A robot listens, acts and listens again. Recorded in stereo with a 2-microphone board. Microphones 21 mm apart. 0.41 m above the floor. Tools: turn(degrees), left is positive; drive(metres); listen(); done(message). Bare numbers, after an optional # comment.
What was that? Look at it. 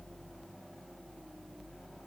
listen()
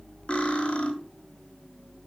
# The cutlery clinking: about 55° left or 125° left.
turn(55)
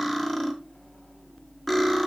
# So it is at 10° left.
turn(10)
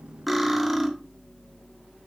done("Facing the cutlery clinking.")